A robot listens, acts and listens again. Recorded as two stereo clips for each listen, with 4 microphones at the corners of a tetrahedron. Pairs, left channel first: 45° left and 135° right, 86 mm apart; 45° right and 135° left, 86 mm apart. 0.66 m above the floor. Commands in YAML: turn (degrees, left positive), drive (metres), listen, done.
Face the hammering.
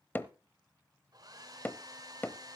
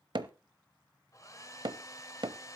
turn: 110
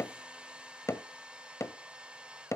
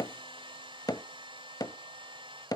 done: "Found it: hammering, straight ahead."